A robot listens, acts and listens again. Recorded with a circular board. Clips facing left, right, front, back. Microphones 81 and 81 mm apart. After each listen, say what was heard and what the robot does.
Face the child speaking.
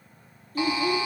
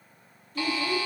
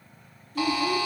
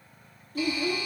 The child speaking: 135° left. Turn 135° left.
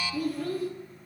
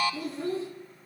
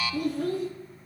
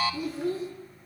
The child speaking is now 25° right. Turn 25° right.
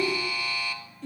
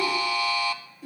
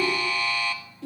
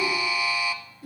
The child speaking is now 10° right. Turn 10° right.
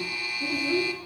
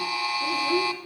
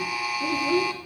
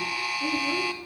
Found it: a child speaking, straight ahead.